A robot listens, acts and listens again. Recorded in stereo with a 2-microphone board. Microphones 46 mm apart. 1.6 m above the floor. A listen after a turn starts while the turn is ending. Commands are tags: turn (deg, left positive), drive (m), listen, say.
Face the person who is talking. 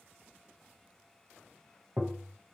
<listen/>
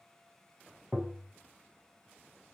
<listen/>
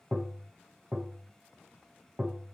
<say>I can't make out anyone speaking to turn to.</say>